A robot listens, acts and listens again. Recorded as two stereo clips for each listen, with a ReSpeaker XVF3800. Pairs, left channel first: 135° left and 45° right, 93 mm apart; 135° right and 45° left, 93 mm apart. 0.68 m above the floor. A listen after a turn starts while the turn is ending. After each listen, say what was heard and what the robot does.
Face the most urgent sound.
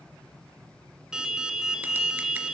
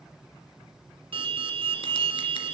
The alarm: 35° left. Turn 35° left.
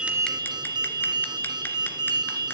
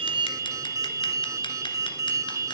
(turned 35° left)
The alarm is now 10° right. Turn 10° right.
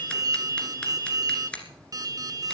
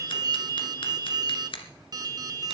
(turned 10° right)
Found it: an alarm, straight ahead, 1 to 2 m away.